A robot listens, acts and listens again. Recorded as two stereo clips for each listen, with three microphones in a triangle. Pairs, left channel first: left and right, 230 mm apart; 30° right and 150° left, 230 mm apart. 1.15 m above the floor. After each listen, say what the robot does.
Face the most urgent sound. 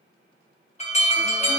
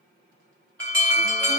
Turn 145° left.
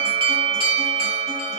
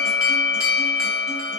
Turn 30° right.
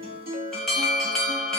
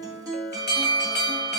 Facing the alarm, 1 to 2 m away.